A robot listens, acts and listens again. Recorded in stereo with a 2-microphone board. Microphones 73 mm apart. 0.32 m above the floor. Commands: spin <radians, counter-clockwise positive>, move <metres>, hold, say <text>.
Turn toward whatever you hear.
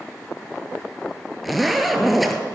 spin 0.52
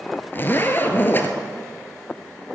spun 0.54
spin 2.62
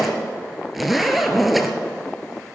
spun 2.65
say Found it: a zipper, straight ahead, 1 to 2 m away.